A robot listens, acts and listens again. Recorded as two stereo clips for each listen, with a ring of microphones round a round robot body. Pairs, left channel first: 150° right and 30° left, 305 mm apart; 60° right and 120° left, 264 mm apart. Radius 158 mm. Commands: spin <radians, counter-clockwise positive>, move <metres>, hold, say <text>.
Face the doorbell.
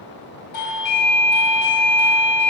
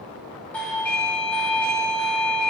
spin -2.53
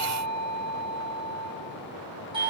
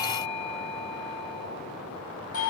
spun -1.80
spin -0.70
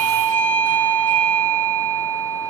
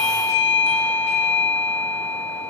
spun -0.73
say Found it: a doorbell, straight ahead, 2 to 4 m away.